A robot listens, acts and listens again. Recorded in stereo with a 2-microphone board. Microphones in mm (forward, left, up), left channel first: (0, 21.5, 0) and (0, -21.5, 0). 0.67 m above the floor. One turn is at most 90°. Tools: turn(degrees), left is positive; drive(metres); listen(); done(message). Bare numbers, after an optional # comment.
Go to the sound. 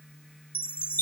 # The chime: about 55° left or 125° left.
turn(55)
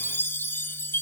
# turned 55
# So it is at 70° left.
turn(70)
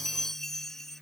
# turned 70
# The chime is now 10° left.
turn(10)
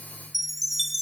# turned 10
drive(1.0)
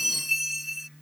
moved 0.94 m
drive(1.0)
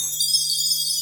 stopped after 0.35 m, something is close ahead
done("I am next to the chime.")